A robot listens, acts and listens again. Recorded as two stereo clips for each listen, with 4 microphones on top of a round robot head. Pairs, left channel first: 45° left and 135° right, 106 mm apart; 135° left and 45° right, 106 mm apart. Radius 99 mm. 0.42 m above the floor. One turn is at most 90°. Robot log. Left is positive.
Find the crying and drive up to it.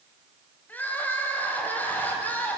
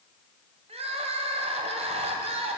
note: The crying: 30° right.
cmd yaw -30
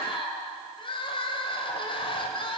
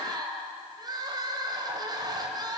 cmd fwd 1.0
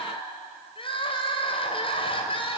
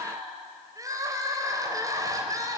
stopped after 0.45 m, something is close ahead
note: The crying is now 15° left.
cmd yaw +15
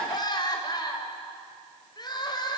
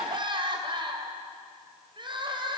end: Blocked. The crying is further on, straight ahead.